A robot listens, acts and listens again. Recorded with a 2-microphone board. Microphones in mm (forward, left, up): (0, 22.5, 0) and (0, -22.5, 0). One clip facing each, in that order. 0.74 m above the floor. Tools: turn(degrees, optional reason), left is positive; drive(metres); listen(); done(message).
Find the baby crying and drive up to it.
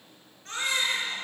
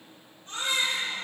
turn(degrees=90)
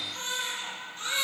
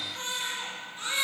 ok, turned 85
drive(metres=1.0)
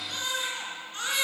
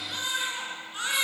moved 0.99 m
turn(degrees=-10, reason="The baby crying is now 10° right.")
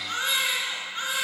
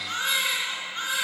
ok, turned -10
drive(metres=1.0)
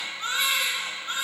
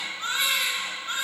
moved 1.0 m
drive(metres=1.0)
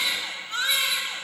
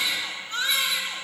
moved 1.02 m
drive(metres=1.0)
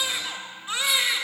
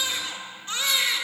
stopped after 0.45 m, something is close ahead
turn(degrees=10, reason="The baby crying is now 10° left.")
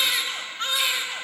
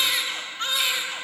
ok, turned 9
done("Arrived at the baby crying, straight ahead.")